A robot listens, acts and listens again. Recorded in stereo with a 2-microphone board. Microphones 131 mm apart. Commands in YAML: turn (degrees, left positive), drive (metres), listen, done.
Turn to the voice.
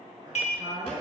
turn: -35
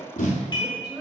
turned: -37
turn: -10
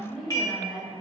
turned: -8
done: "Found it: a woman speaking, straight ahead, 1 to 2 m away."